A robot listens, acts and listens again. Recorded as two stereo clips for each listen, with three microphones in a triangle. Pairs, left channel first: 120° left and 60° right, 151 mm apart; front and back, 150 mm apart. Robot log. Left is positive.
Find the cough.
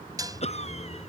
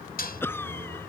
note: The cough: 75° left.
cmd yaw +75
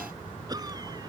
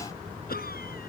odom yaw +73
end: Facing the cough.